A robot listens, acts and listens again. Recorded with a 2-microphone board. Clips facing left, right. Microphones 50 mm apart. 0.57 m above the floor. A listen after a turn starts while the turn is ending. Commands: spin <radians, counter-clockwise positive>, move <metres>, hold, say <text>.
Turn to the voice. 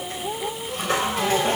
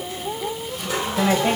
spin -1.22
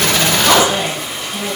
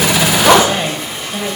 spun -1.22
spin -0.61
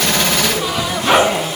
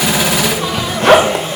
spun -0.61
hold
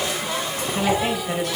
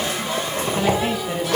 say Facing the woman speaking.